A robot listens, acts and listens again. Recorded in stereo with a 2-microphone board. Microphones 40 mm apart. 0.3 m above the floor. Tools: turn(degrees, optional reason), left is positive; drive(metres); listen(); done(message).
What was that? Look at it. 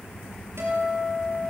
turn(degrees=-90)
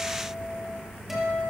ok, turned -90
turn(degrees=-10, reason="So it is at 10° right.")
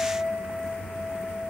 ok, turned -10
done("Found it: a guitar, straight ahead.")